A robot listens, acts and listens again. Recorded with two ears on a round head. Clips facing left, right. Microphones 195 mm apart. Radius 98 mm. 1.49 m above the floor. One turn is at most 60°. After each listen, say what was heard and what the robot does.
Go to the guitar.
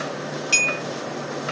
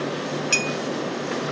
Keep listening.
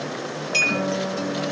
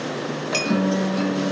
The guitar: about 70° right or 110° right. Turn 60° right.
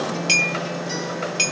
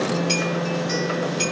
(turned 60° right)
So it is at 10° right. Turn 10° right.
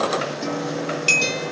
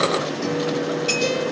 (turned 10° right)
Drive 1.0 m forward.
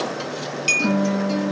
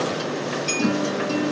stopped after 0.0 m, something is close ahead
Blocked. The guitar is further on, straight ahead.